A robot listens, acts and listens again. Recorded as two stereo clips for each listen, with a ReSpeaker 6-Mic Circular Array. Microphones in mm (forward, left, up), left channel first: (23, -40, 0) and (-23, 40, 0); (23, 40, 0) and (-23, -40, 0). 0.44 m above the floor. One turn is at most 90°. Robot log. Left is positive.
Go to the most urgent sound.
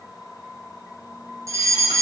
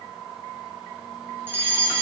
note: The fire alarm: 175° left.
cmd yaw +90
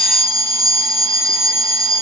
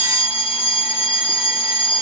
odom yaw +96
note: The fire alarm is now 75° left.
cmd yaw +75
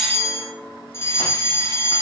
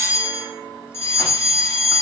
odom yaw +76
cmd fwd 1.0
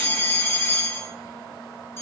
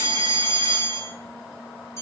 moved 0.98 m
cmd fwd 1.0
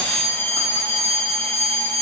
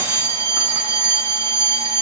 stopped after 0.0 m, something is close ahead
end: Something is in my way. I am facing the fire alarm but have not reached it.